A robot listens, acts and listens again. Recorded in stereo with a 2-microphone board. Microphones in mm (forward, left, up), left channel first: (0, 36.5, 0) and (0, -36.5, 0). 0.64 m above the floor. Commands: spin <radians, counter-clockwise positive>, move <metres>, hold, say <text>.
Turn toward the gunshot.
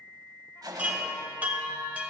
spin -1.13
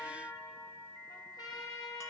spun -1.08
hold
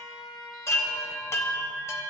say I heard a gunshot, but can't make it out now. It was about straight ahead or 55° right.